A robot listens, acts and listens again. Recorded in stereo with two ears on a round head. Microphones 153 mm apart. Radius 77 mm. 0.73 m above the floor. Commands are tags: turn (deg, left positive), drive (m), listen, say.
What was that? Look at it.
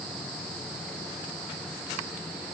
<listen/>
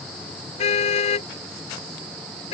<turn deg="35"/>
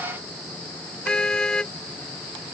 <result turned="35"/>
<say>Found it: a car horn, straight ahead.</say>